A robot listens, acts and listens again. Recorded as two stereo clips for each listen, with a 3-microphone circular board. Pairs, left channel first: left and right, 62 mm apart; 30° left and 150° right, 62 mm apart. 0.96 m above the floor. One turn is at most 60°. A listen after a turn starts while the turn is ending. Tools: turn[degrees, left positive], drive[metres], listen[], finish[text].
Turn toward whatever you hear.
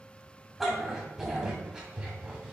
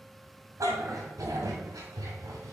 Thought: The dog barking: 165° right.
Action: turn[-60]
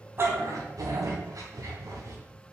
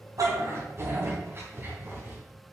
Thought: The dog barking is now 100° right.
Action: turn[-60]
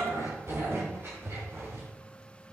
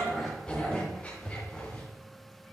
Thought: The dog barking is now 35° right.
Action: turn[-35]
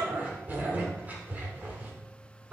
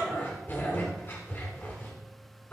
Thought: The dog barking is now 25° right.
Action: turn[-25]
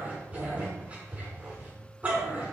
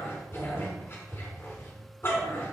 Thought: The dog barking is now 20° right.
Action: turn[-20]
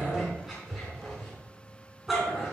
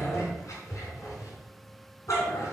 Action: finish[Found it: a dog barking, straight ahead, 2 to 4 m away.]